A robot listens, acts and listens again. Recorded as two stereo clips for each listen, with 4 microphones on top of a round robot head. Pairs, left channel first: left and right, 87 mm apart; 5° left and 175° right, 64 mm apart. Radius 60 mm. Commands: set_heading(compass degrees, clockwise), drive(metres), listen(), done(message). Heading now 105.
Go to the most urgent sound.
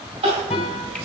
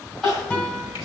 set_heading(185)
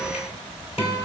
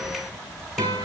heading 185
listen()
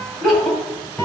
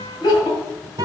drive(1.0)
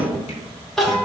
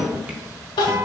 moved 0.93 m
drive(1.0)
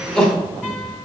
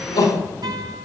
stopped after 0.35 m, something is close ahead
done("Arrived at the crying, straight ahead.")